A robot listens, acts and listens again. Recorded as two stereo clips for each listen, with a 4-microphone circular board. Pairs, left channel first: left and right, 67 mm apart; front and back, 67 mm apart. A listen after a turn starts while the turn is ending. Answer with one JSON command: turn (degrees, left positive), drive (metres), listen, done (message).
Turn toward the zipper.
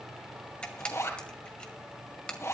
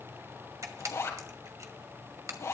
{"turn": 45}
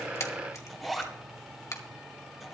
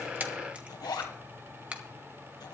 {"done": "Facing the zipper, 2 to 4 m away."}